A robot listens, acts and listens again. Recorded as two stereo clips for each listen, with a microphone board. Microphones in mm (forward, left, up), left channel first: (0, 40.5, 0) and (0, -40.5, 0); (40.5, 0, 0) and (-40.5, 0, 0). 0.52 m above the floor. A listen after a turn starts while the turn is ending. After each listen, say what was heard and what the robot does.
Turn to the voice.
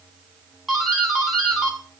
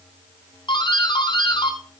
Keep listening.
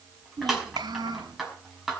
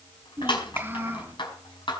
The child speaking: 115° right. Turn 115° right.
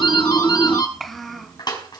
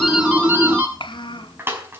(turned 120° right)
Facing the child speaking.